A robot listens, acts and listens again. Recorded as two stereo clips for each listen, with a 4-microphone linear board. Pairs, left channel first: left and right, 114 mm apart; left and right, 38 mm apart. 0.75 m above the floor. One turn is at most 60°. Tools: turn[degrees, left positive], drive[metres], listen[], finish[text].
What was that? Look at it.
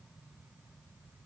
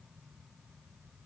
Action: listen[]
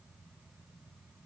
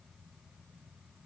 Action: listen[]
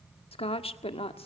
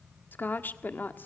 Thought: The woman speaking: about 60° left or 120° left.
Action: turn[60]
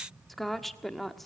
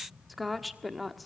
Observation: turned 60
Action: finish[Found it: a woman speaking, straight ahead, 1 to 2 m away.]